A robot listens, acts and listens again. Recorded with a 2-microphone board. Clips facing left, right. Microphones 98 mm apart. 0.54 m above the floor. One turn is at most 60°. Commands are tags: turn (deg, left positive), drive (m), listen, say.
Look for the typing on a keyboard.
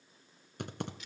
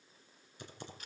<turn deg="60"/>
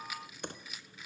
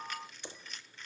<turn deg="55"/>
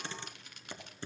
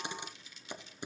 <turn deg="-15"/>
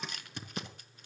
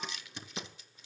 <say>Found it: typing on a keyboard, straight ahead.</say>